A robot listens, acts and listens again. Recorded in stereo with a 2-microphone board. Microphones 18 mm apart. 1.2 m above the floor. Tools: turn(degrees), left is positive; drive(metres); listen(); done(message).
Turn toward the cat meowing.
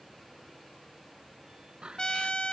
turn(degrees=-75)
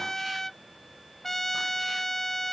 listen()
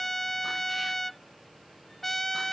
listen()
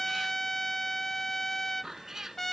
turn(degrees=-25)
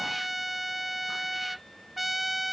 listen()
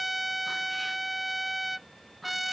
listen()
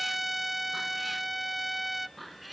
done("Facing the cat meowing.")